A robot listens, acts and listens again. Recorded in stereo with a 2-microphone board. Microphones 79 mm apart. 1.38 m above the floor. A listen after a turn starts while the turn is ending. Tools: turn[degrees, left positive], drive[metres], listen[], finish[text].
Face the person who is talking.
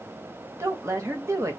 Thought: The woman speaking: about 40° right or 140° right.
Action: turn[-40]
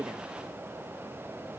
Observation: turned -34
Action: listen[]
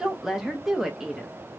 Action: finish[Facing the woman speaking, under 1 m away.]